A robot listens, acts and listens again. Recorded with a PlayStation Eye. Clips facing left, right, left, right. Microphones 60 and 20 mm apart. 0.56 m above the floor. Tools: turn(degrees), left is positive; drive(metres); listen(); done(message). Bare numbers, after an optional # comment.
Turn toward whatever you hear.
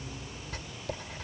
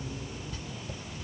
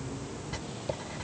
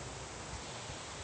# The writing: about 65° left or 115° left.
turn(65)
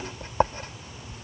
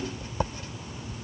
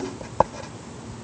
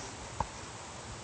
# So it is at 45° left.
turn(45)
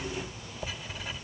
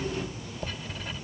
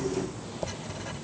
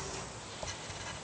done("Found it: writing, straight ahead.")